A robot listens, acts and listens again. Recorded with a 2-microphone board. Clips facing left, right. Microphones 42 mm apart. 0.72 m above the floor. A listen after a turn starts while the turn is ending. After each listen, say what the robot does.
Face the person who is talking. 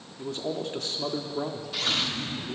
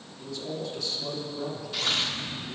Turn 50° left.
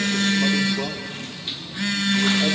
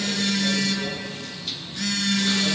Keep listening.
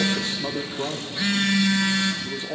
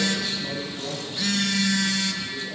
Turn 70° left.
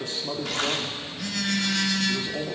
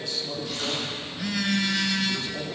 Turn 25° left.
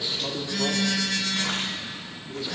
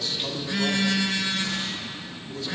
Turn 10° left.
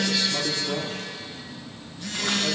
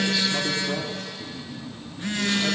Found it: a man speaking, straight ahead, 1 to 2 m away.